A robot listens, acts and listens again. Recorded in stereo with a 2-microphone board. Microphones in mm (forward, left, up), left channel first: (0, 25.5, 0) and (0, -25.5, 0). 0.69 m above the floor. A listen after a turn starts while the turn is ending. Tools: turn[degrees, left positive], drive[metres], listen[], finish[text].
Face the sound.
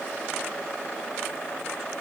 Action: listen[]
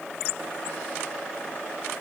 Action: listen[]
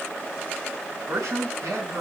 Action: turn[-90]
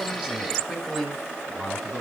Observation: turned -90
Action: finish[Found it: a man speaking, straight ahead, over 4 m away.]